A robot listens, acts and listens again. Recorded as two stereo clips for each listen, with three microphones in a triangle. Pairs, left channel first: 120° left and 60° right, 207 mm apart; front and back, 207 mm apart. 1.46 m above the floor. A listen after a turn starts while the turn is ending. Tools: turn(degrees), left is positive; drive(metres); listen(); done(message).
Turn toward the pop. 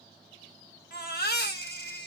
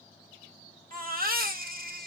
listen()
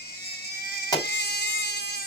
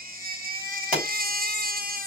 turn(degrees=-130)
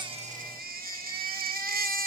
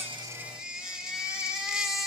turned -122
turn(degrees=-10)
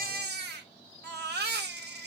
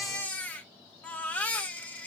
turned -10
done("I heard a pop from this way, but can't make it out now.")